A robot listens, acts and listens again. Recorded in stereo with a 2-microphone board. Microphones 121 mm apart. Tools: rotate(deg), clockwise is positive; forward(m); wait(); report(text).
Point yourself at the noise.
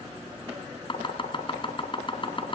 rotate(-45)
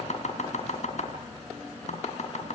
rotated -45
rotate(-80)
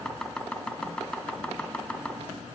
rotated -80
report("Found it: chopping, straight ahead, 2 to 4 m away.")